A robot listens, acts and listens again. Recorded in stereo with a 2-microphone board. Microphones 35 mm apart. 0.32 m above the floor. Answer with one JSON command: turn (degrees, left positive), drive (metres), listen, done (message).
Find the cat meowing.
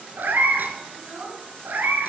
{"turn": -75}
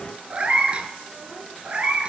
{"turn": -30}
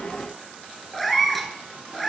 {"done": "Facing the cat meowing, 1 to 2 m away."}